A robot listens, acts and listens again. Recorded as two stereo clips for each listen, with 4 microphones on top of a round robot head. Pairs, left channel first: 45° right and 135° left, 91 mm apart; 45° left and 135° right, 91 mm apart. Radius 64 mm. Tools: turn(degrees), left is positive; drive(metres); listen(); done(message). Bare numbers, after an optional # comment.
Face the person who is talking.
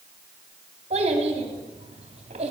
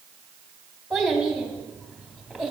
# The child speaking: 135° left.
turn(135)
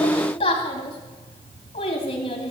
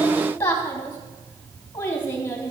# The child speaking is now 25° right.
turn(-25)
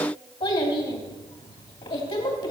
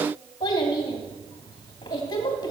done("Facing the child speaking.")